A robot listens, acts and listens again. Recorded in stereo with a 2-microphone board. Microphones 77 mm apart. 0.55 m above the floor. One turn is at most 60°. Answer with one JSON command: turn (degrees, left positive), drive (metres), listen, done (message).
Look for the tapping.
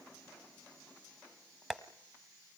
{"turn": -30}
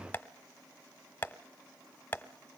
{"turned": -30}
{"turn": 20}
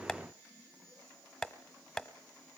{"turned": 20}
{"done": "Facing the tapping, 1 to 2 m away."}